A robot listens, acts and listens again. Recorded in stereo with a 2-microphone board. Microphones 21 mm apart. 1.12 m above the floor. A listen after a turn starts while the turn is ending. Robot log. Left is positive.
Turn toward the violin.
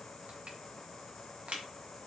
cmd idle
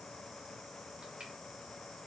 cmd idle
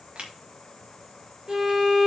note: The violin: about 40° right or 140° right.
cmd yaw -40
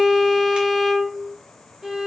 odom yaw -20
note: So it is at 25° right.
cmd yaw -25
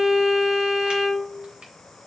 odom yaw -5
note: The violin is now 20° right.
cmd yaw -20
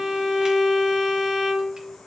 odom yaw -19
end: Found it: a violin, straight ahead, 2 to 4 m away.